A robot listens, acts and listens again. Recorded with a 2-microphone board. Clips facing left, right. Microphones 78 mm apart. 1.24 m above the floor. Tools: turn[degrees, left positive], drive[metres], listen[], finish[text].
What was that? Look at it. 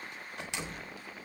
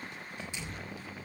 Action: turn[90]
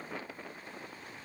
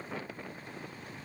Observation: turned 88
Action: finish[Facing where the door slam came from. I can't hear it now.]